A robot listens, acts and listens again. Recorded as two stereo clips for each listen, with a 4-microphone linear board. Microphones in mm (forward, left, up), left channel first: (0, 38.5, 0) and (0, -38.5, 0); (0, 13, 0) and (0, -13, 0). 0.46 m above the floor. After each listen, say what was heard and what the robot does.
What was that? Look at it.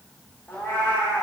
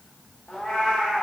The cat meowing: about 30° left or 150° left. Turn 30° left.
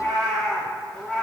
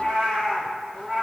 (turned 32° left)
So it is at 15° left. Turn 15° left.
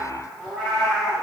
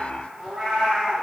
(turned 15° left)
Facing the cat meowing, over 4 m away.